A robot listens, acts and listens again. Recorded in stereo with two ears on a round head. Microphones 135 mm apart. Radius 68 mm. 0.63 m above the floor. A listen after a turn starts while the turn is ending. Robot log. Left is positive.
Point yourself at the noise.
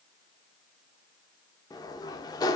note: The sliding door: about 25° left or 155° left.
cmd yaw +25
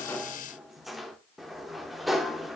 end: Facing the sliding door, under 1 m away.